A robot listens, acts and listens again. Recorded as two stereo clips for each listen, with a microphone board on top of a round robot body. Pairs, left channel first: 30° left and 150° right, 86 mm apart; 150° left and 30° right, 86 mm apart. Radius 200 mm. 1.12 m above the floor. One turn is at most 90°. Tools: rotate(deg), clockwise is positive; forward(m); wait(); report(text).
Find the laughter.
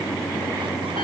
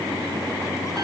wait()
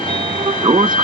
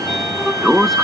wait()
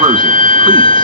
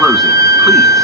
report("I can't make out laughter to turn to.")